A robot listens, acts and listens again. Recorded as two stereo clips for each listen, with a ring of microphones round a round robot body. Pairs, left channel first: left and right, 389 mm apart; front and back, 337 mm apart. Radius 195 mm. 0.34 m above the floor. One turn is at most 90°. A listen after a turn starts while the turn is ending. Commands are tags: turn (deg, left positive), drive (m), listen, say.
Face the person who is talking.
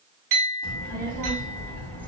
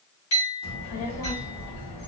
<say>Found it: a child speaking, straight ahead.</say>